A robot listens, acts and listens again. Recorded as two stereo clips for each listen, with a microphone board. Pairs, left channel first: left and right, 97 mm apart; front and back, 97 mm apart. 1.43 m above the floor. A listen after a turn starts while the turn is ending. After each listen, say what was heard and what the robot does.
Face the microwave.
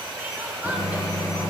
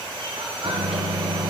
The microwave: 140° left. Turn 140° left.
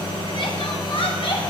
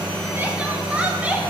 The microwave is now 50° left. Turn 50° left.
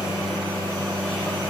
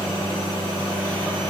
The microwave is now 15° left. Turn 15° left.
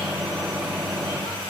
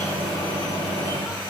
Facing the microwave.